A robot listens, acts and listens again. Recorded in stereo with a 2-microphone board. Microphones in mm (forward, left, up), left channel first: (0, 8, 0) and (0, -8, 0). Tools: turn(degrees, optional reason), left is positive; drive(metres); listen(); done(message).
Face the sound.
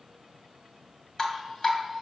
turn(degrees=35, reason="The dripping: about 35° left or 145° left.")
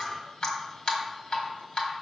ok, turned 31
turn(degrees=105, reason="So it is at 105° left.")
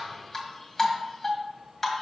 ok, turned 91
turn(degrees=15, reason="The dripping is now 15° left.")
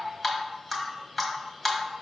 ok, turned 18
done("Facing the dripping.")